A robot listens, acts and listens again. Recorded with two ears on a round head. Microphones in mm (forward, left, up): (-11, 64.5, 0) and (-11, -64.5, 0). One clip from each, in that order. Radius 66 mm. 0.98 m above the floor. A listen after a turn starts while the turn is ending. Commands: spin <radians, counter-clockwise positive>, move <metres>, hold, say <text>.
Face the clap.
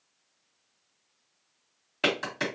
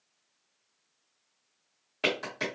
spin 0.26
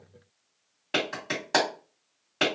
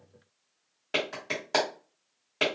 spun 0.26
say Facing the clap, 1 to 2 m away.